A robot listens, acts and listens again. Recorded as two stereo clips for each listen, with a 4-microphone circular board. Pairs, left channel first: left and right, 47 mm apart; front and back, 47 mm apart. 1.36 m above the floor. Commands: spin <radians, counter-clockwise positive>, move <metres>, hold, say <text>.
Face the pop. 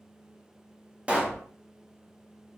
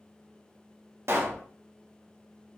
spin -2.71
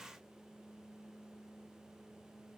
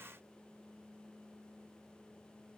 say Facing where the pop came from. I can't hear it now.